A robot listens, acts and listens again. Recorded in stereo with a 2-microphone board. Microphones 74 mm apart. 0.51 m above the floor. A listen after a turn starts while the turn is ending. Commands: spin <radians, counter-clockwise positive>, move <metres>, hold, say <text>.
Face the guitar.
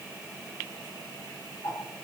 hold
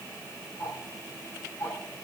hold
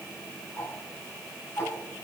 say I can't make out a guitar to turn to.